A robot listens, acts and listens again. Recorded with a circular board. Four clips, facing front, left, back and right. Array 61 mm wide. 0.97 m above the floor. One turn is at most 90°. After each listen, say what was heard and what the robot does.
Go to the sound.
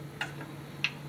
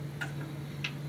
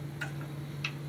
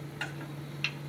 The chopping: 25° right. Turn 25° right.
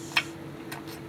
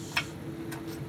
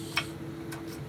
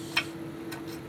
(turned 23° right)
Drive 1.0 m forward.
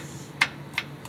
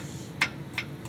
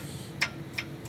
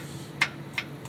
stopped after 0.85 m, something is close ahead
Arrived at the chopping, straight ahead.